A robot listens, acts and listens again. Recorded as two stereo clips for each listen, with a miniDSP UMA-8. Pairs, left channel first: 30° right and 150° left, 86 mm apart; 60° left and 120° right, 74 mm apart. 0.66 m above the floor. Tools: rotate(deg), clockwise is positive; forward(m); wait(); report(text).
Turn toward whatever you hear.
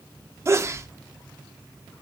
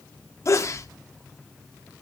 rotate(-100)
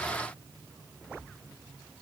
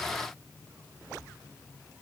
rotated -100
report("I heard a sneeze from this way, but can't make it out now.")